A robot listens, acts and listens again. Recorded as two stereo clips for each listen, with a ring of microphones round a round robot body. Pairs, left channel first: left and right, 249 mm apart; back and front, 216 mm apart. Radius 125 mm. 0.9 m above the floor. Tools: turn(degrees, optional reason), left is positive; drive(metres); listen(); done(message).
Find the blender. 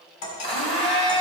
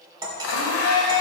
turn(degrees=160, reason="The blender: 160° left.")
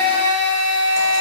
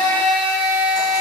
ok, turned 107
turn(degrees=55, reason="The blender is now 55° left.")
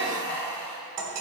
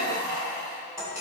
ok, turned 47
done("Found it: a blender, straight ahead, 2 to 4 m away.")